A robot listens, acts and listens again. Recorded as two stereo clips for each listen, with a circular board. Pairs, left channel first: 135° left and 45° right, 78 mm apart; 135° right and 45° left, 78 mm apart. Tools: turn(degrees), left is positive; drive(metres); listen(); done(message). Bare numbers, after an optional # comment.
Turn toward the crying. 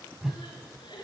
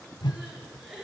# The crying: 130° left.
turn(130)
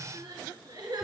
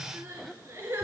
# The crying is now 10° right.
turn(-10)
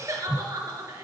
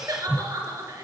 done("Facing the crying.")